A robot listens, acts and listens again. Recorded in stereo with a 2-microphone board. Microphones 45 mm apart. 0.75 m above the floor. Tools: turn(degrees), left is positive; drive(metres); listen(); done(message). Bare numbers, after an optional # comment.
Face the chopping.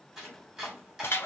turn(-30)
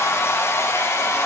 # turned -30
listen()
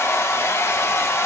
listen()
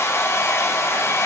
done("I heard chopping, but can't make it out now. It was about 25° left or 145° right.")